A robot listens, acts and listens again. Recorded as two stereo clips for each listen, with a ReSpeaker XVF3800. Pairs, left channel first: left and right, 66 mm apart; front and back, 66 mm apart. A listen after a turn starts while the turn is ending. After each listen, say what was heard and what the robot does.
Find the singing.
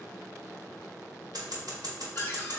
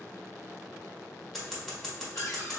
Keep listening.
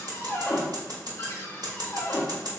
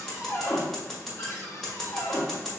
Keep listening.
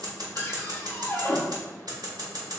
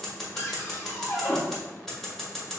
I can't make out singing to turn to.